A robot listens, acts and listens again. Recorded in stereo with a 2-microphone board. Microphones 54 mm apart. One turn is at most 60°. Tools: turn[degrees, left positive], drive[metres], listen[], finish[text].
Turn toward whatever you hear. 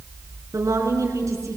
Thought: The woman speaking: about 75° right or 105° right.
Action: turn[-60]
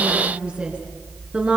Thought: So it is at 20° right.
Action: turn[-20]
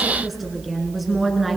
Action: finish[Facing the woman speaking, over 4 m away.]